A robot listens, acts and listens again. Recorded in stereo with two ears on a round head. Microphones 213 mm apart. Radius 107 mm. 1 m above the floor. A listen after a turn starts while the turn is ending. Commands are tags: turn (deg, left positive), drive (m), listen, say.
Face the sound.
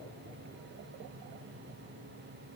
<listen/>
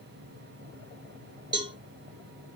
<turn deg="-20"/>
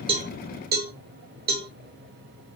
<turn deg="-140"/>
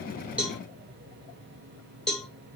<say>Found it: a cowbell, straight ahead, 1 to 2 m away.</say>